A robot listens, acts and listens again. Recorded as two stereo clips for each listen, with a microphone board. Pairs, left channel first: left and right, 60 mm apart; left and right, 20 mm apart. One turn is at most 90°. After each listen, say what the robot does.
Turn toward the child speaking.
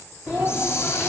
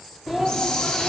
Turn 30° right.
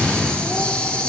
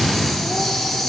Keep listening.
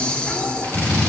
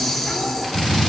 Keep listening.
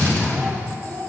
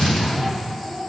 Turn 25° left.
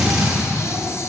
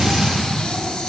Keep listening.
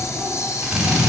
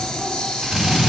Keep listening.
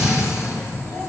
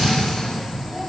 Facing where the child speaking came from. I can't hear it now.